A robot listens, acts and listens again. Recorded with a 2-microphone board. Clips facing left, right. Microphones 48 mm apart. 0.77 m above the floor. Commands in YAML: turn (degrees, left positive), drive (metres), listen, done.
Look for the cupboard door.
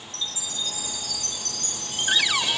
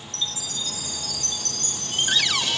turn: 30
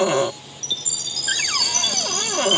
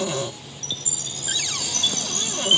turn: 140
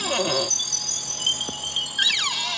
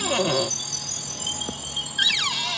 done: "Found it: a cupboard door, straight ahead."